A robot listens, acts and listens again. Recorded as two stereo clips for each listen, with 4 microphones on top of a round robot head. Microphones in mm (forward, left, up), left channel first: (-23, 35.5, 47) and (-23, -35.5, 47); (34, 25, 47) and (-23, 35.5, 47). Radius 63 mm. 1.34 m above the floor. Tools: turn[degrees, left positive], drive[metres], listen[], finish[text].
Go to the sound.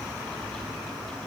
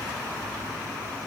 Action: listen[]
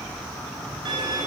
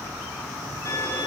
Thought: The violin: 60° right.
Action: turn[-60]
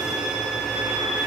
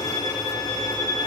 Action: drive[1.0]
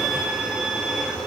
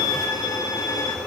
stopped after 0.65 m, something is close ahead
Action: finish[Something is in my way. I am facing the violin but have not reached it.]